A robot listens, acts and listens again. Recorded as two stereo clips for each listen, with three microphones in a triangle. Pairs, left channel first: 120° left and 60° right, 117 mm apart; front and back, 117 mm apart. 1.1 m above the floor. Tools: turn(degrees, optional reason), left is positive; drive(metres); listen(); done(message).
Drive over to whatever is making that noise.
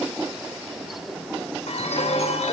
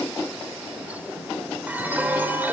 turn(degrees=105, reason="The chime: 105° left.")
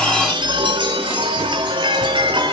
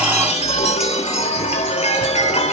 turn(degrees=-15, reason="The chime is now 15° right.")
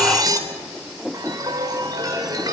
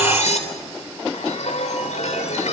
drive(metres=1.0)
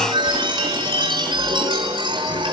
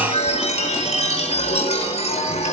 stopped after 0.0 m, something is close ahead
turn(degrees=-15, reason="The chime is now 15° right.")
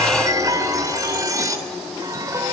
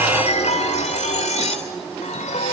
done("Something is in my way. I am facing the chime but have not reached it.")